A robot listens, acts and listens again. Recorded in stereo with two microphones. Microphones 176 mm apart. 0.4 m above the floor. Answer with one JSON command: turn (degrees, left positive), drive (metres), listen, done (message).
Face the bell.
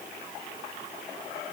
{"listen": true}
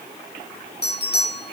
{"turn": 65}
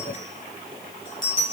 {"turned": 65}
{"turn": 50}
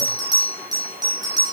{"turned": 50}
{"turn": -20}
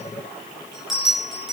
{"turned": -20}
{"done": "Facing the bell."}